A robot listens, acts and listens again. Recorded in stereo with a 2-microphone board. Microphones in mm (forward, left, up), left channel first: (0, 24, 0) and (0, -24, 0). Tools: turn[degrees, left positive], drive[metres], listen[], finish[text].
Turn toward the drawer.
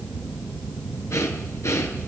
Action: listen[]
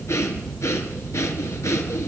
Action: listen[]
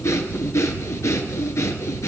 Action: finish[I can't make out a drawer to turn to.]